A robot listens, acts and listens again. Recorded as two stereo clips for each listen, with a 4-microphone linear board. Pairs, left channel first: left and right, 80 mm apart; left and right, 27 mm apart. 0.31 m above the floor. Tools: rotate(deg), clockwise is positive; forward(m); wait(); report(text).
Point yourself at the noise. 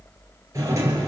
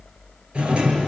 rotate(35)
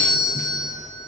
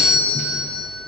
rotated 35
report("Found it: a doorbell, straight ahead.")